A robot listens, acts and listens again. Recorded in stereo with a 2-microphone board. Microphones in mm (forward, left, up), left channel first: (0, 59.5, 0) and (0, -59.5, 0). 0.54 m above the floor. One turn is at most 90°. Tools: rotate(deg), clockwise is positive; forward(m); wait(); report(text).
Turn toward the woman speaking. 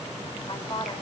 rotate(-45)
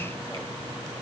wait()
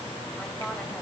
wait()
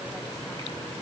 report("I heard a woman speaking, but can't make it out now. It was about straight ahead or 90° left.")